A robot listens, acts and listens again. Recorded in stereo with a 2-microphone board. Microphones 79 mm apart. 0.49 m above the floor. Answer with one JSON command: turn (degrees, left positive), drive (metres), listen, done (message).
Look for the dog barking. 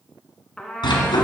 {"turn": 90}
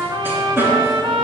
{"turn": -25}
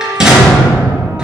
{"turn": -10}
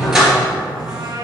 {"done": "Found it: a dog barking, straight ahead, 2 to 4 m away."}